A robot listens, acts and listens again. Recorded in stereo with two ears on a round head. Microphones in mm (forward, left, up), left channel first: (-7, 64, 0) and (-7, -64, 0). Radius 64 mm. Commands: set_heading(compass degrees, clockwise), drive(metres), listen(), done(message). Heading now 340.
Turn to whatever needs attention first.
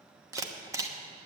listen()
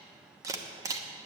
listen()
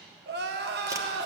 set_heading(70)
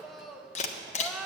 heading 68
done("Found it: crying, straight ahead, 1 to 2 m away.")